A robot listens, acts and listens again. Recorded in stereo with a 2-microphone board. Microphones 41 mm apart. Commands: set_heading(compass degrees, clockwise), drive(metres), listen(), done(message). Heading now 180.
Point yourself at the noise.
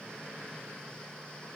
listen()
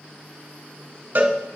set_heading(235)
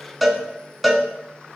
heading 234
done("Facing the cowbell.")